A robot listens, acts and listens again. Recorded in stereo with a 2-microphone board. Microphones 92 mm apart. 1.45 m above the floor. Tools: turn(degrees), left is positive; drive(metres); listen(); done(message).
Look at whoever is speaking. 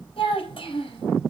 turn(degrees=75)
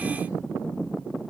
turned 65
listen()
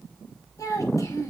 turn(degrees=40)
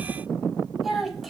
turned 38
done("Facing the child speaking.")